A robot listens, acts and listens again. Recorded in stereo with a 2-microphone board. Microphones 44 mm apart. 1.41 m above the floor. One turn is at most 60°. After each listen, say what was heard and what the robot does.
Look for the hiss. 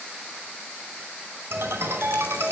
Keep listening.
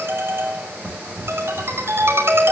Keep listening.
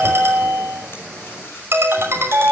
I can't make out a hiss to turn to.